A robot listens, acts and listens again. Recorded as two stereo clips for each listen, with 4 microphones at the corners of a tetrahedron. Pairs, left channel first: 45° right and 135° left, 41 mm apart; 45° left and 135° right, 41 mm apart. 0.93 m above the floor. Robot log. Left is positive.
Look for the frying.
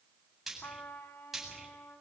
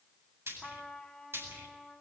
note: The frying: 140° right.
cmd yaw -140
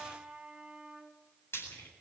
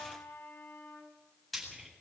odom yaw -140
note: The frying is now 40° right.
cmd yaw -40
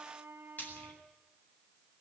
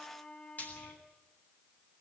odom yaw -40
end: Facing the frying, over 4 m away.